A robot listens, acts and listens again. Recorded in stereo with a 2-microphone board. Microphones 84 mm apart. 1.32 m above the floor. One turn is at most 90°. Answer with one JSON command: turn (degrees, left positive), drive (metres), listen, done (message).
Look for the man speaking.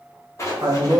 {"turn": -50}
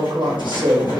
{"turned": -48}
{"turn": -80}
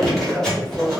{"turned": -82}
{"done": "Facing the man speaking."}